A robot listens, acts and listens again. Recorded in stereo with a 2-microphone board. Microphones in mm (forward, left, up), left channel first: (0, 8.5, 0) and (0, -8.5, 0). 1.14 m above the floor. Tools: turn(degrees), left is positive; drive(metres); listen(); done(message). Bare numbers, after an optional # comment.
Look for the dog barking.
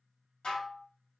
listen()
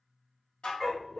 # The dog barking: about 35° left or 145° left.
turn(35)
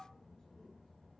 listen()
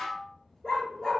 # So it is at 105° left.
turn(105)
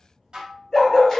# The dog barking is now 25° left.
turn(25)
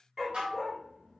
done("Facing the dog barking.")